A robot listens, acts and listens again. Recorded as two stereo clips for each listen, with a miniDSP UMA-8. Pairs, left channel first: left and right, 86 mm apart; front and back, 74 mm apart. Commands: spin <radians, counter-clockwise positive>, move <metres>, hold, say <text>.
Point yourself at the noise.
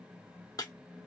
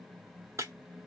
spin 2.27
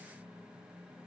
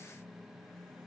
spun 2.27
say I heard breaking glass from this way, but can't make it out now.